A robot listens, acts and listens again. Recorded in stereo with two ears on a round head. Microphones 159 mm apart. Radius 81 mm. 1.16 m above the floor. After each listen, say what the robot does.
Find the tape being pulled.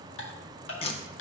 Turn 30° left.
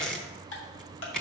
Facing the tape being pulled.